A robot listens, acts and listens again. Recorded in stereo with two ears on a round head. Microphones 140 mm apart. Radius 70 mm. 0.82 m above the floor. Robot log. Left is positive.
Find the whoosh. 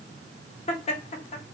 cmd idle
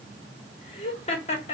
cmd idle
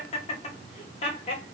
end: I can't make out a whoosh, only laughter.